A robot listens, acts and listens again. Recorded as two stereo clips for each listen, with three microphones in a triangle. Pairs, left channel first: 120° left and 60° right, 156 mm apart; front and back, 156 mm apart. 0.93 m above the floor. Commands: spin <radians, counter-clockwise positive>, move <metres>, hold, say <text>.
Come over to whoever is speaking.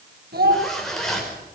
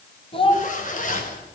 spin -0.96
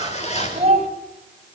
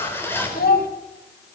spin -0.17
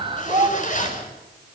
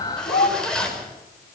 move 1.0
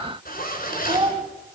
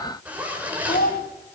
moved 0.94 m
move 1.0
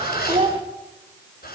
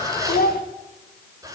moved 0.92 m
move 1.0
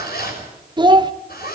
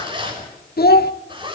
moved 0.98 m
move 1.0
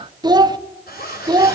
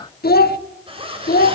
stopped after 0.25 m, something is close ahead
say Arrived at the child speaking, straight ahead.